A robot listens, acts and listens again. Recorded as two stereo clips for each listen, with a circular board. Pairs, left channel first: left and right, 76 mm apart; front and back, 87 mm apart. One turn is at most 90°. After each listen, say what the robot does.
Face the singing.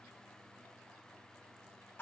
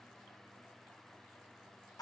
Keep listening.
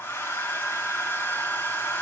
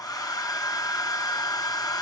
Keep listening.
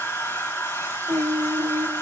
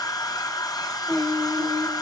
Turn 90° right.
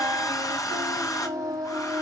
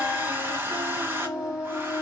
Turn 65° right.
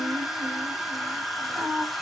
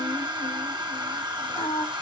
Facing the singing.